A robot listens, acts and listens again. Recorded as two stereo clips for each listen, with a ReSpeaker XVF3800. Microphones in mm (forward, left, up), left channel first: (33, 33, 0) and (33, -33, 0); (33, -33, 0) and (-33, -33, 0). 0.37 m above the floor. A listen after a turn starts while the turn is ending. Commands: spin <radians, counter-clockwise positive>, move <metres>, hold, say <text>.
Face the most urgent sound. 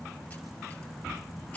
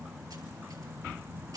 hold
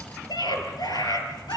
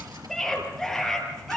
spin 1.48
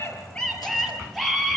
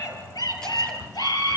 say Found it: a scream, straight ahead, over 4 m away.